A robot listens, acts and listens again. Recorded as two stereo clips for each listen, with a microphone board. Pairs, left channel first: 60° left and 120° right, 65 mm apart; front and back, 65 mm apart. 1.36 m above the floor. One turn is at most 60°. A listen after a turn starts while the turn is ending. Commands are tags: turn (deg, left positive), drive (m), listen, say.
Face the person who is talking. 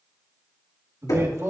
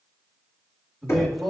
<turn deg="-60"/>
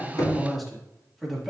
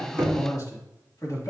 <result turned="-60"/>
<turn deg="-30"/>
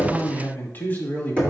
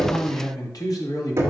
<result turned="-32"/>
<say>Found it: a man speaking, straight ahead.</say>